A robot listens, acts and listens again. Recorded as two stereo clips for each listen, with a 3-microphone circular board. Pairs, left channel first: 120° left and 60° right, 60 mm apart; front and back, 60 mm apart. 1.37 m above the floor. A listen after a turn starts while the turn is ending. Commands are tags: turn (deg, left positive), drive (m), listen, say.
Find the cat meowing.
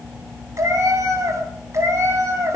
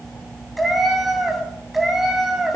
<turn deg="-95"/>
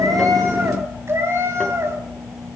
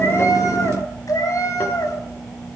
<turn deg="-20"/>
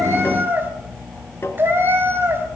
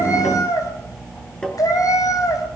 <turn deg="-10"/>
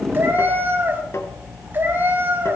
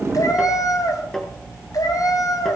<say>Facing the cat meowing.</say>